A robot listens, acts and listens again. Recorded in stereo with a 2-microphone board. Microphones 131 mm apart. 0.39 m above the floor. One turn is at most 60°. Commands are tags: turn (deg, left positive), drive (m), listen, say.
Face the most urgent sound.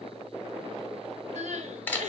<turn deg="-60"/>
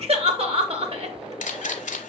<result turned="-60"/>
<turn deg="-50"/>
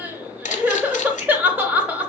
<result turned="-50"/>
<turn deg="-15"/>
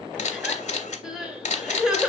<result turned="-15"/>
<say>Facing the crying.</say>